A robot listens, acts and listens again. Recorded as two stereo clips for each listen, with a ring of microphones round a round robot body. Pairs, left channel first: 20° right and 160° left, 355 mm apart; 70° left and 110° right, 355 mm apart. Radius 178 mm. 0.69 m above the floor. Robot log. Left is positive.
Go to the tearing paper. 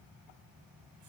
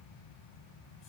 cmd idle
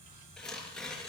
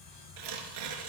note: The tearing paper: 110° right.
cmd yaw -110
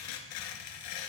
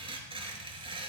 note: The tearing paper is now 35° right.
cmd yaw -35
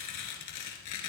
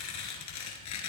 note: The tearing paper is now 20° left.
cmd yaw +20
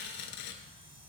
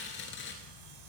note: The tearing paper is now 10° left.
cmd yaw +10
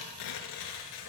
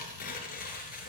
cmd fwd 1.0
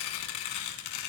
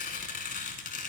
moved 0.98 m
cmd fwd 1.0
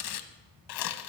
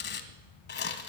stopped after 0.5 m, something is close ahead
end: I am next to the tearing paper.